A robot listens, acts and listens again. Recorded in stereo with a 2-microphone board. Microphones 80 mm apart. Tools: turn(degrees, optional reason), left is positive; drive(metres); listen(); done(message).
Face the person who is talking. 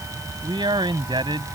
turn(degrees=-90)
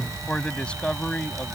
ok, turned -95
turn(degrees=15, reason="So it is at 15° left.")
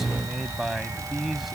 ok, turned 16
done("Found it: a man speaking, straight ahead.")